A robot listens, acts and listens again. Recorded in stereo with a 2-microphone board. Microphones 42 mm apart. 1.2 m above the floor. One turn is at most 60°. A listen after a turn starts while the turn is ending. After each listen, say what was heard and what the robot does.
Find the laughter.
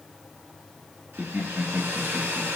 The laughter: about 60° right or 120° right. Turn 60° right.
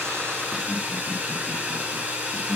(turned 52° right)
So it is at 45° right. Turn 45° right.
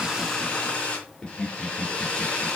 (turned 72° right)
The laughter is now 10° left. Turn 10° left.
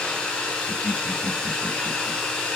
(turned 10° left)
Facing the laughter.